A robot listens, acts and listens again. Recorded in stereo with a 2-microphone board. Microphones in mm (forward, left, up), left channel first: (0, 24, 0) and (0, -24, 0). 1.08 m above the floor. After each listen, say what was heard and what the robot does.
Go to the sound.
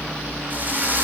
The drill: about 40° right or 140° right. Turn 40° right.
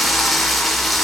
Drive 1.0 m forward.
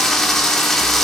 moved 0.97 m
The drill is now 10° left. Turn 10° left.
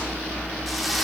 Drive 1.0 m forward.
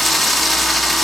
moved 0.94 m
Drive 1.0 m forward.
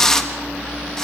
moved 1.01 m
The drill is now 10° left. Turn 10° left.
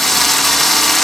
Drive 1.0 m forward.
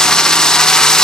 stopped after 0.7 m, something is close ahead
The drill is now 15° left. Turn 15° left.
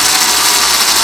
Arrived at the drill, straight ahead.